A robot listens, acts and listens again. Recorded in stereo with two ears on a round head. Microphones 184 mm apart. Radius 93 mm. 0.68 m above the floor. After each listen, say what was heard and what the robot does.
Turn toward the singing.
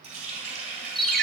Keep listening.
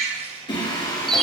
The singing: about 20° left or 160° left. Turn 20° left.
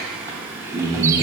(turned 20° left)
So it is at 20° right. Turn 20° right.
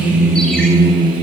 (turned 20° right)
The singing is now 30° right. Turn 30° right.
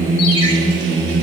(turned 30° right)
The singing is now 30° right. Turn 30° right.
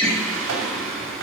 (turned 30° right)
Found it: singing, straight ahead.